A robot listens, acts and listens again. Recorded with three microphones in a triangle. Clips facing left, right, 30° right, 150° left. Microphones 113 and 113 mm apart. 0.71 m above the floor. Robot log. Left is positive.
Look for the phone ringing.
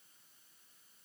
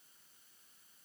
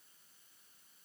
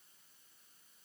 cmd idle
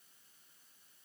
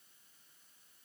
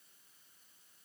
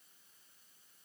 cmd idle
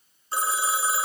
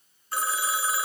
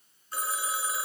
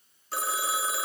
note: The phone ringing: 155° left.
cmd yaw +155
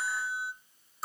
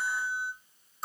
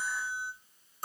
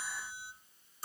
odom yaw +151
end: Facing the phone ringing.